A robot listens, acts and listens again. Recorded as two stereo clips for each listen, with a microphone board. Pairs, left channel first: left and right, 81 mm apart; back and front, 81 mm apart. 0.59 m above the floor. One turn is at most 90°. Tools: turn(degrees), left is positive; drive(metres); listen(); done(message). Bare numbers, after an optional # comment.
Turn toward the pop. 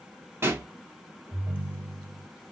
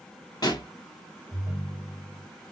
# The pop: 150° right.
turn(-90)
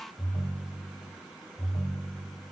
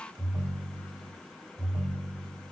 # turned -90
# Nothing new. It was at 60° right.
turn(-60)
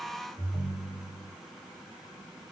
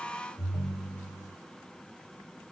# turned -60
done("I heard a pop from this way, but can't make it out now.")